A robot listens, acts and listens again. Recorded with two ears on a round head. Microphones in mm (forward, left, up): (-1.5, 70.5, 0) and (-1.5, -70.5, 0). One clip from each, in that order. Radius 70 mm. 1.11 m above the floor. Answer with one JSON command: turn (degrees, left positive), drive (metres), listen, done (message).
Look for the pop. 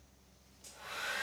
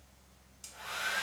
{"listen": true}
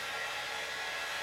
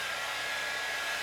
{"listen": true}
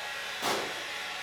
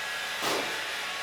{"turn": -30}
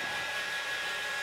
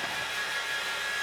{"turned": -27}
{"listen": true}
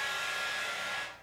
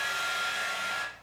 {"done": "I heard a pop, but can't make it out now. It was about 20° left or 150° right."}